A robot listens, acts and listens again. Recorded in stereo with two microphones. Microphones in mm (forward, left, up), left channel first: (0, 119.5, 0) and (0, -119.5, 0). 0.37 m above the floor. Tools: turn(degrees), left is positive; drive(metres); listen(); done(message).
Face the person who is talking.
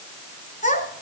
turn(degrees=30)
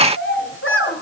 turn(degrees=120)
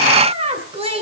turn(degrees=-25)
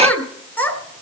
done("Facing the child speaking.")